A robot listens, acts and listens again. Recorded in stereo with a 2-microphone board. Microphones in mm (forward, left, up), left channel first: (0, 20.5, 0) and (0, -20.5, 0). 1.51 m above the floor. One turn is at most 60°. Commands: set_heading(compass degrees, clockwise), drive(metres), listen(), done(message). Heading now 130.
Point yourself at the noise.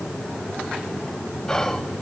set_heading(100)
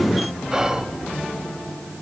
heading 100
set_heading(120)
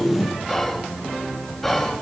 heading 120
done("Found it: whispering, straight ahead.")